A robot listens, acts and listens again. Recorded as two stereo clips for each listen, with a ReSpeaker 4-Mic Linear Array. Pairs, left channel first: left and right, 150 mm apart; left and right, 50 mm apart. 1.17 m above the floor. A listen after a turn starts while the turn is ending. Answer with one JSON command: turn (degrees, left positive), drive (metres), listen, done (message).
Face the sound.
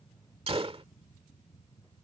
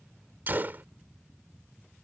{"turn": -40}
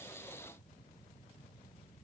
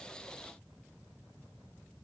{"listen": true}
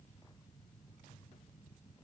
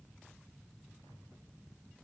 {"done": "I heard a gunshot, but can't make it out now. It was about straight ahead or 100° right."}